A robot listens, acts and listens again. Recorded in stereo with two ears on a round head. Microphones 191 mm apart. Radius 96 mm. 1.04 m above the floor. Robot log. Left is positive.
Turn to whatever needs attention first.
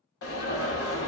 note: The alarm: about 70° left or 110° left.
cmd yaw +70
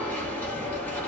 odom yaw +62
note: So it is at 10° left.
cmd yaw +10
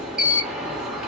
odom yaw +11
end: Found it: an alarm, straight ahead.